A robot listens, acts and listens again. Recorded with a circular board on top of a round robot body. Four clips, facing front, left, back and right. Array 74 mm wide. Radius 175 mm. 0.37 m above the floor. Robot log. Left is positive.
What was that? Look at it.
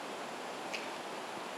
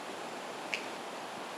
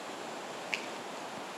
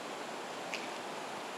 note: The finger snap: 155° left.
cmd yaw +155
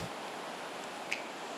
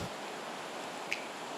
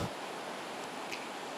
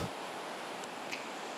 note: The finger snap is now 50° left.
cmd yaw +50
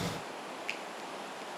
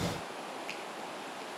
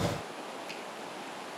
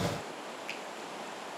cmd idle
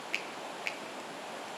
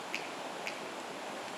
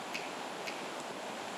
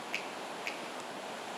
end: Found it: a finger snap, straight ahead.